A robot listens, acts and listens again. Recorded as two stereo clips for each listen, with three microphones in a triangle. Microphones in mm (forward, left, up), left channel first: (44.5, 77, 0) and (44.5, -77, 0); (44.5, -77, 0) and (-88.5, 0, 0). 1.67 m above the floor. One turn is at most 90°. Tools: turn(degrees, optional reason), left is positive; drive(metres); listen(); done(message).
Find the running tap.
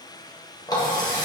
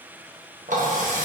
turn(degrees=90, reason="The running tap: 150° left.")
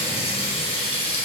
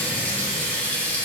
turn(degrees=45, reason="The running tap is now 45° left.")
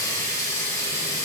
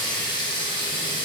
turn(degrees=25, reason="The running tap is now 25° left.")
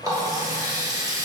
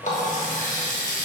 turn(degrees=-25, reason="The running tap is now 25° right.")
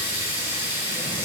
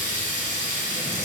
turn(degrees=-15, reason="The running tap is now 15° right.")
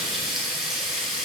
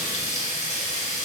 done("Facing the running tap, 1 to 2 m away.")